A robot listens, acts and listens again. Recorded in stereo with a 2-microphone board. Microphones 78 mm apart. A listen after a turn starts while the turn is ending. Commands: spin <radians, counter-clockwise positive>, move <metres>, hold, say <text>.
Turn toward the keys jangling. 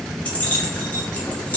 spin 0.35
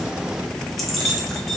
say Found it: keys jangling, straight ahead.